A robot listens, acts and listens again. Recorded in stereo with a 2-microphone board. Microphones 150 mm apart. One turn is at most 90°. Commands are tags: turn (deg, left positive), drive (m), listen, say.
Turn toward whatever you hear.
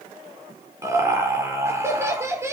<turn deg="-20"/>
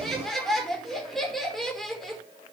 <say>Found it: laughter, straight ahead.</say>